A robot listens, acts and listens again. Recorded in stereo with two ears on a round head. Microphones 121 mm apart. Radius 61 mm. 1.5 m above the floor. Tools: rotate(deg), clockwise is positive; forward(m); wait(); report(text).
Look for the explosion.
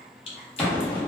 rotate(-30)
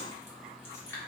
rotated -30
wait()
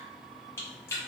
report("I heard an explosion, but can't make it out now. It was about 20° right or 140° left.")